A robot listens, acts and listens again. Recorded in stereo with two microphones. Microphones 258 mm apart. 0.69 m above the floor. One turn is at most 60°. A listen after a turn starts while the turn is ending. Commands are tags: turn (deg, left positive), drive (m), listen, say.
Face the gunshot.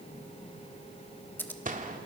<turn deg="-35"/>
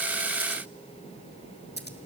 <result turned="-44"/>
<listen/>
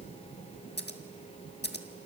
<say>I heard a gunshot, but can't make it out now. It was about 10° left or 105° right.</say>